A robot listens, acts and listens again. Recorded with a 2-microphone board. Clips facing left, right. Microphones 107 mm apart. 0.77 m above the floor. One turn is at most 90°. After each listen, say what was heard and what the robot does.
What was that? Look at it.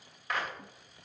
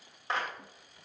The clap: about 30° right or 150° right. Turn 30° right.
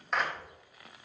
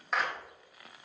Found it: a clap, straight ahead.